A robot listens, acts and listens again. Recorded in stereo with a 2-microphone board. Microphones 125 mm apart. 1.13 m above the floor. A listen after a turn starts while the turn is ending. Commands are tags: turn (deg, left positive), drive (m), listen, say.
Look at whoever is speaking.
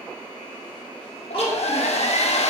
<turn deg="50"/>
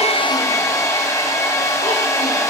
<listen/>
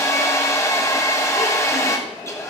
<listen/>
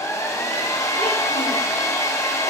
<say>I heard a child speaking, but can't make it out now. It was about straight ahead or 80° left.</say>